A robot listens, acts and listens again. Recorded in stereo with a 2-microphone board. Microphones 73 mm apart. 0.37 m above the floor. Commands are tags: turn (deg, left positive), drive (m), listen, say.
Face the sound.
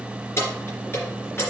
<turn deg="35"/>
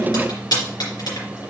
<turn deg="110"/>
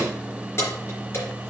<turn deg="35"/>
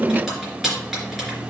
<say>Found it: keys jangling, straight ahead, 2 to 4 m away.</say>